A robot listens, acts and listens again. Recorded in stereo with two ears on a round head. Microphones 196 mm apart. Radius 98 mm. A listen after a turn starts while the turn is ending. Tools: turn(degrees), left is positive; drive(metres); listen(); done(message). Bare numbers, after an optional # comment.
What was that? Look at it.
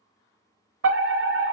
# The fire alarm: about 60° right or 120° right.
turn(-60)
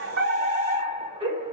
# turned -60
# So it is at 30° right.
turn(-30)
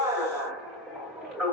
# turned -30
done("Facing the fire alarm.")